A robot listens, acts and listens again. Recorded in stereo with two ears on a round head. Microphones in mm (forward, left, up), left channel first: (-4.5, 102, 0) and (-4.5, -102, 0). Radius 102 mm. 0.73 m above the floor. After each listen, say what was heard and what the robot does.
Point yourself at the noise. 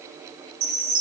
Turn 90° right.
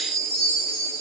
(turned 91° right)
Facing the chime.